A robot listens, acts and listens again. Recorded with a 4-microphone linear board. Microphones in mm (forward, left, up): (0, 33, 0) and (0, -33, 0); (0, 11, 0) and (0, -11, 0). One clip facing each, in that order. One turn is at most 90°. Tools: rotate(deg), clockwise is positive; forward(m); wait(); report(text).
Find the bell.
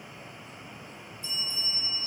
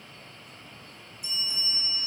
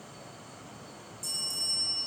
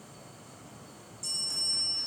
rotate(15)
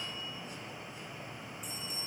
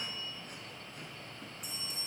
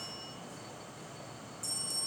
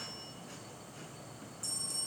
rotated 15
report("Facing the bell.")